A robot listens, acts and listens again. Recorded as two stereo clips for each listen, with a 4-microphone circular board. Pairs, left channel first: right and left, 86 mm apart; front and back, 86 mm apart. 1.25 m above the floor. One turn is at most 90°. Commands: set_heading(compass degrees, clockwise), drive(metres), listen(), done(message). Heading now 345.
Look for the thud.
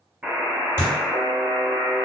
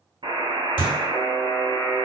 set_heading(10)
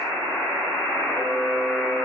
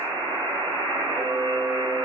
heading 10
done("I heard a thud from this way, but can't make it out now.")